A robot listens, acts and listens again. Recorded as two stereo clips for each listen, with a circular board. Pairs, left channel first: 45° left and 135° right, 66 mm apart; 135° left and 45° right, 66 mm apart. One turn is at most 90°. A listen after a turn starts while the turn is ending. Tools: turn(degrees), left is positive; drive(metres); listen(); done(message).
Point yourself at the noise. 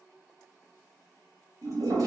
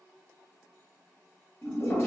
turn(degrees=-90)
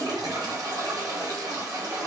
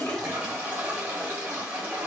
turn(degrees=-90)
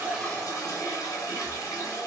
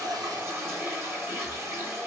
turn(degrees=10)
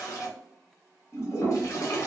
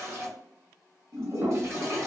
done("Found it: a toilet flushing, straight ahead.")